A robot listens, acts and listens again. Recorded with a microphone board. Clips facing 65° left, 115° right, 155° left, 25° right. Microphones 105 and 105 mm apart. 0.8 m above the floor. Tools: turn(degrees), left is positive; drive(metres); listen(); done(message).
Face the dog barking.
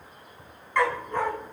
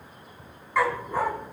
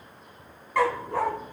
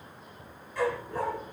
turn(degrees=165)
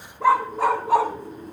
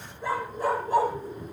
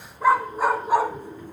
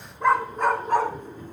turn(degrees=75)
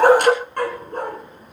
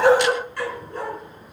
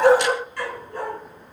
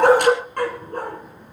turn(degrees=25)
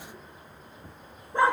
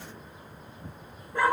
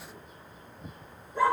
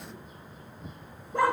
done("Found it: a dog barking, straight ahead, 2 to 4 m away.")